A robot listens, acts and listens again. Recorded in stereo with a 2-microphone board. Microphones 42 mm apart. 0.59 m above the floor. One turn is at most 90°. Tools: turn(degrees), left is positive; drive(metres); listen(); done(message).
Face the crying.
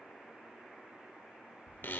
listen()
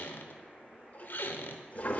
listen()
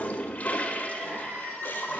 turn(degrees=-90)
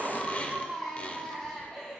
turn(degrees=10)
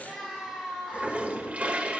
done("Facing the crying.")